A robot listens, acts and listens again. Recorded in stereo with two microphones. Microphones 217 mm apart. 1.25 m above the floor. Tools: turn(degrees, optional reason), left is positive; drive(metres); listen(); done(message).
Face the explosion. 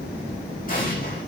turn(degrees=40, reason="The explosion: about 40° left or 140° left.")
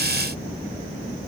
listen()
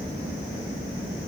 done("I heard an explosion, but can't make it out now. It was about straight ahead or 100° left.")